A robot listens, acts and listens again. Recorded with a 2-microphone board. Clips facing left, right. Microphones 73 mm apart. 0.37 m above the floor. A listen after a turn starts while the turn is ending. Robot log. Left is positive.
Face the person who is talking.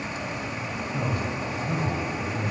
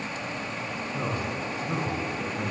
note: The man speaking: about 35° left or 145° left.
cmd yaw +35
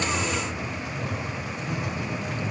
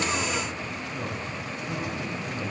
end: Found it: a man speaking, straight ahead, 2 to 4 m away.